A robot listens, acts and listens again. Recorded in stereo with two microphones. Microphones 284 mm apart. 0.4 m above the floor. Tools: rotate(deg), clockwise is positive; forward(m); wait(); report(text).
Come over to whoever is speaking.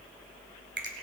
wait()
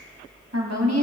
rotate(60)
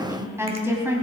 rotate(10)
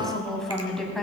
forward(1.0)
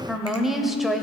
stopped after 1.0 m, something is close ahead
report("Arrived at the woman speaking, straight ahead.")